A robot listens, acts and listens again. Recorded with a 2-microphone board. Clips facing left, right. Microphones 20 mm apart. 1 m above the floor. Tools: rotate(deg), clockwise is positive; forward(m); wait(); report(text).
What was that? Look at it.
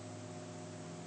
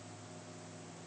wait()
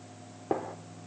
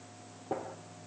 rotate(-70)
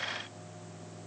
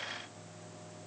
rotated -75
wait()
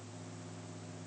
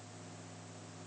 report("I heard a gunshot, but can't make it out now. It was about 5° right or 35° left.")